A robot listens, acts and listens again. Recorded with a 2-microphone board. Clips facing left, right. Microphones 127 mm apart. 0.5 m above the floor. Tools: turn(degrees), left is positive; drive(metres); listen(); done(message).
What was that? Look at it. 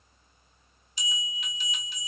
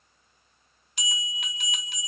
turn(degrees=-60)
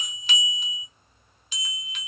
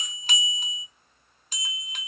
turn(degrees=-50)
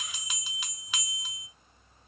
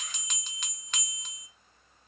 done("Facing the bell, under 1 m away.")